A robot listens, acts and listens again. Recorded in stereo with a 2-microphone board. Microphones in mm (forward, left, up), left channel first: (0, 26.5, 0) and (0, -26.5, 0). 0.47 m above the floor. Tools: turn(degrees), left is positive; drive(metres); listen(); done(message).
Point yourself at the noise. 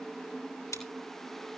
turn(degrees=90)
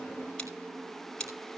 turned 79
turn(degrees=15)
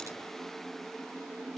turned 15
listen()
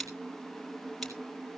done("Found it: scissors, straight ahead, over 4 m away.")